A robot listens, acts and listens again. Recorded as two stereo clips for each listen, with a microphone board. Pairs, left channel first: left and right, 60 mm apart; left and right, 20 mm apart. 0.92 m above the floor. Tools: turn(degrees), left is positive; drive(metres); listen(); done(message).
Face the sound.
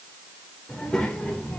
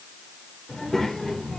turn(degrees=30)
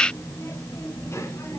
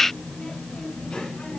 turn(degrees=125)
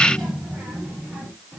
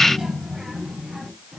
done("Found it: a child speaking, straight ahead, over 4 m away.")